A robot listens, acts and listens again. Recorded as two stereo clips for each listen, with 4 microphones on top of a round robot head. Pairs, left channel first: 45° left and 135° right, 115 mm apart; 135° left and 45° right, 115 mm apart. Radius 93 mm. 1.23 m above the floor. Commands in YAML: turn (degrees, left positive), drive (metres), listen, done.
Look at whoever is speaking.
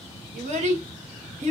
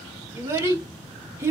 turn: -115
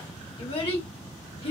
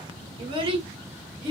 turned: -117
done: "Facing the child speaking."